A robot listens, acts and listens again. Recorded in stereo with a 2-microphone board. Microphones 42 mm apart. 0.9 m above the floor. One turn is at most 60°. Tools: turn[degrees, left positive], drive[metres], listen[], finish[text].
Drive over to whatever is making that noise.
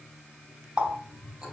Thought: The running tap: about 20° right or 160° right.
Action: turn[-20]
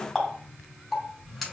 Action: drive[1.0]
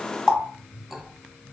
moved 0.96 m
Action: drive[1.0]
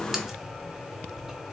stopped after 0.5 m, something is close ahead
Action: listen[]
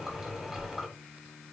Thought: The running tap is now 10° right.
Action: turn[-10]
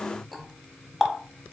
Action: finish[I am next to the running tap.]